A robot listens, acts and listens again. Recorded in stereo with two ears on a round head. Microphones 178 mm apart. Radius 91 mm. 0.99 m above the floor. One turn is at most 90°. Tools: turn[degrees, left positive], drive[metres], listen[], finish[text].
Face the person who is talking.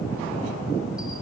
Action: listen[]
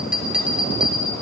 Action: listen[]
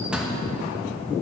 Action: finish[I can't make out anyone speaking, only a bell.]